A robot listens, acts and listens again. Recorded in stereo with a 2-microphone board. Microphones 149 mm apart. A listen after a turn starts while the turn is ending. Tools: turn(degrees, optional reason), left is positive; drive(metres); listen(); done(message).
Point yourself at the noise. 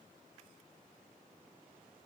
listen()
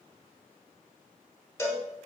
turn(degrees=20, reason="The cowbell: about 20° left or 160° left.")
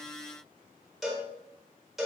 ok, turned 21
done("Found it: a cowbell, straight ahead.")